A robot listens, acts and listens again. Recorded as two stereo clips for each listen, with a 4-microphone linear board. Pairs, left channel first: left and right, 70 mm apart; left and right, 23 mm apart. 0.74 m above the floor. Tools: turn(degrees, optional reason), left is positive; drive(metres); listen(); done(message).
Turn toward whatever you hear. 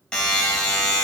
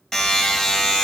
turn(degrees=30)
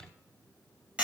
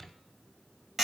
turn(degrees=-15, reason="So it is at 15° right.")
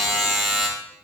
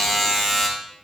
done("Facing the buzzer, 2 to 4 m away.")